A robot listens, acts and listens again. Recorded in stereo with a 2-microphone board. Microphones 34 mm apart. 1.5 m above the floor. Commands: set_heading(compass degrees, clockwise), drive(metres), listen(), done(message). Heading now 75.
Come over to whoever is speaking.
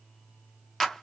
listen()
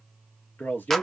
set_heading(345)
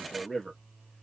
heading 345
set_heading(335)
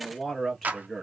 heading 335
drive(1.0)
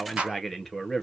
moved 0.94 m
drive(1.0)
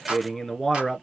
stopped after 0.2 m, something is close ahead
done("I am next to the man speaking.")